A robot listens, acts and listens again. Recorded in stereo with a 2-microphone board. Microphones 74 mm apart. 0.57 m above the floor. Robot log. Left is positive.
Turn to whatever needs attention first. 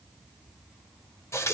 cmd idle
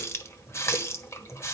cmd idle
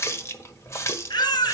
cmd yaw +90
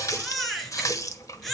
end: Found it: a baby crying, straight ahead, 2 to 4 m away.